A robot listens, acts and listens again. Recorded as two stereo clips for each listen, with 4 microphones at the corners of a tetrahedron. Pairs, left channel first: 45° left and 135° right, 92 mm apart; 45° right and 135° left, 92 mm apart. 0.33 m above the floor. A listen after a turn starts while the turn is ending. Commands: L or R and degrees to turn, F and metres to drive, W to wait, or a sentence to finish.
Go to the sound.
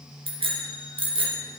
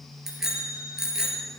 R140
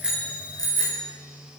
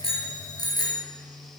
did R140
F1.0
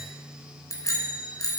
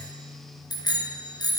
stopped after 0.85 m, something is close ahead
Blocked. The bicycle bell is further on, straight ahead.